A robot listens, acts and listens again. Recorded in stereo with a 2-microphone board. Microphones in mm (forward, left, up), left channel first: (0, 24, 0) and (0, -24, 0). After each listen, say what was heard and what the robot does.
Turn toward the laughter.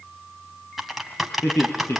The laughter: about 70° left or 110° left. Turn 70° left.
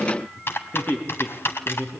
So it is at 40° left. Turn 40° left.
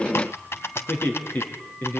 The laughter is now 40° left. Turn 40° left.
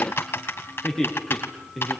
Facing the laughter.